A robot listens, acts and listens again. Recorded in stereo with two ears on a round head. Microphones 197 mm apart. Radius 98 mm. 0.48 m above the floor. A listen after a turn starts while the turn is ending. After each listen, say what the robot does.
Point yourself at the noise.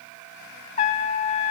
Turn 35° left.
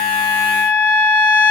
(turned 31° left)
Turn 10° left.
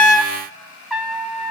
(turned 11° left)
Found it: a trumpet, straight ahead.